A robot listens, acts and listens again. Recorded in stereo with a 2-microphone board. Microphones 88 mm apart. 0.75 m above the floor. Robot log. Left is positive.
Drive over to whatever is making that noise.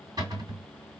note: The cupboard door: about 50° right or 130° right.
cmd yaw -50
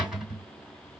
note: So it is at 10° right.
cmd yaw -10
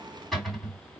cmd fwd 1.0
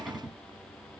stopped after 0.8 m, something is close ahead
end: I am next to the cupboard door.